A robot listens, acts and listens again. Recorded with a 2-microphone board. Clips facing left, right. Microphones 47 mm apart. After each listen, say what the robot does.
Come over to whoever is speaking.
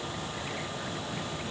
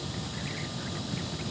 Keep listening.
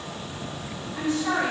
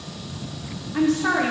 Turn 70° right.
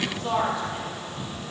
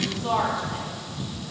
Drive 1.0 m forward.
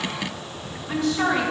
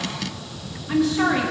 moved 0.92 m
Drive 1.0 m forward.
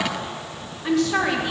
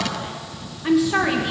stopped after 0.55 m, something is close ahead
I am next to the woman speaking.